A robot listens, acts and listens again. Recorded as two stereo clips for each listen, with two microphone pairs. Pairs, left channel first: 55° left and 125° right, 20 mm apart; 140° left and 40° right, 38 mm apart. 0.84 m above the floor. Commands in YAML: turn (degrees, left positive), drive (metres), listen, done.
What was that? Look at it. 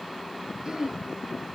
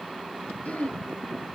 turn: 175
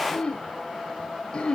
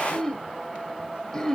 turn: 65
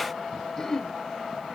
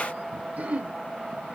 done: "Found it: throat clearing, straight ahead."